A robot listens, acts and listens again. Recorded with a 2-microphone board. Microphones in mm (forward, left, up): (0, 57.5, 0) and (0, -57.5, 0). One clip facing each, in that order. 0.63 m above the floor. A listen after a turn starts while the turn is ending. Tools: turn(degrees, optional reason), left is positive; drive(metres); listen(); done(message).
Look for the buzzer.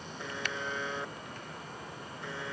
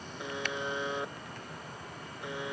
turn(degrees=-30)
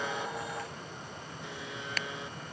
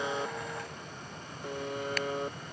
turn(degrees=-140, reason="So it is at 140° right.")
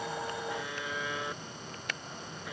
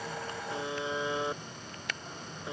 turn(degrees=-25, reason="The buzzer is now 25° right.")
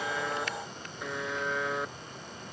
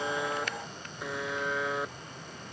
done("Facing the buzzer.")